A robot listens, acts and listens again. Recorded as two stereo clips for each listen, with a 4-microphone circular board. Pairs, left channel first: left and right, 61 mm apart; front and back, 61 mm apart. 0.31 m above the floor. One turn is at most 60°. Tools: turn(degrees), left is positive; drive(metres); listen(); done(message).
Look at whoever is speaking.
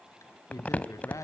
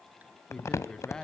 turn(degrees=60)
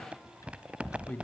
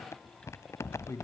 turn(degrees=30)
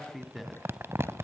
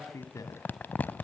done("Facing the man speaking, 2 to 4 m away.")